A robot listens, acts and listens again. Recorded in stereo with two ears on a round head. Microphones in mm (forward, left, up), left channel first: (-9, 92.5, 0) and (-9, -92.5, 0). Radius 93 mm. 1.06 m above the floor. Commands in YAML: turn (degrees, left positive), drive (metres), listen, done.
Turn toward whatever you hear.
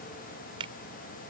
turn: -25
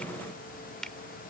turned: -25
done: "Facing the finger snap."